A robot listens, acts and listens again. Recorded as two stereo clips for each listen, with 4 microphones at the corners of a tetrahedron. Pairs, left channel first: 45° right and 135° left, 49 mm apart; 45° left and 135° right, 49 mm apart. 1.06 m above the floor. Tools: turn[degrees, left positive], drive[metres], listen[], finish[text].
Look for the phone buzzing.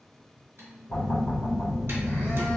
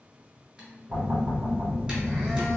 Thought: The phone buzzing: 40° right.
Action: turn[-40]
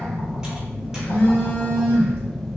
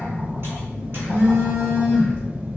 Thought: The phone buzzing is now 10° left.
Action: turn[10]
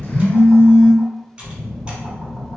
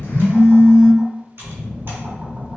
Action: finish[Found it: a phone buzzing, straight ahead.]